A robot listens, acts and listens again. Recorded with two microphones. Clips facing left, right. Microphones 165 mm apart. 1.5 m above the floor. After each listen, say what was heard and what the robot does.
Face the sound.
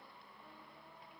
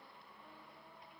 Keep listening.
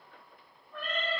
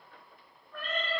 The cat meowing: about 25° left or 155° left. Turn 25° left.
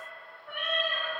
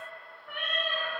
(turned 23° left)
So it is at 130° left. Turn 130° left.
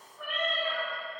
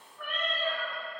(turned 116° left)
The cat meowing is now 10° left. Turn 10° left.
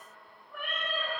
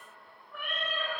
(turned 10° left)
Facing the cat meowing.